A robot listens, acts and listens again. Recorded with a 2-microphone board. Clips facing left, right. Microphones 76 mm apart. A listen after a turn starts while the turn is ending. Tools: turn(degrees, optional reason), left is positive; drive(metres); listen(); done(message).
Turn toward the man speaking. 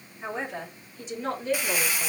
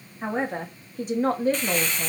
turn(degrees=-45, reason="The man speaking: about 45° right or 135° right.")
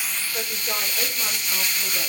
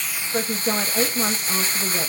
turn(degrees=-110, reason="So it is at 110° right.")
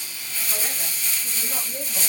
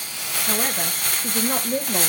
turn(degrees=-70, reason="The man speaking is now 70° right.")
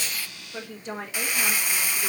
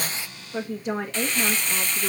turn(degrees=-20, reason="The man speaking is now 20° right.")
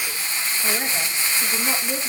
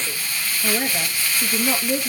done("Found it: a man speaking, straight ahead.")